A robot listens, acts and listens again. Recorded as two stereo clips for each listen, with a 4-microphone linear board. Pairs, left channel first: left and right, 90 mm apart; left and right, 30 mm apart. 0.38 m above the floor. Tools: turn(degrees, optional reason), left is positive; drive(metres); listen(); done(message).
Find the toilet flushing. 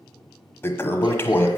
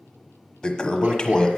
turn(degrees=25, reason="The toilet flushing: about 25° left or 155° left.")
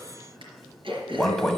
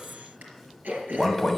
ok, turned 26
done("Found it: a toilet flushing, straight ahead, 1 to 2 m away.")